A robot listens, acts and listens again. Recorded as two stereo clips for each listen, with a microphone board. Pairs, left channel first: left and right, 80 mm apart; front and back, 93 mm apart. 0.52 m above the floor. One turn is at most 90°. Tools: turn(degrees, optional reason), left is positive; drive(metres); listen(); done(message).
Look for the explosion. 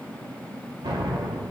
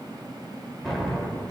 turn(degrees=-85, reason="The explosion: 85° right.")
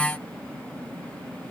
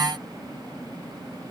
done("I heard an explosion from this way, but can't make it out now.")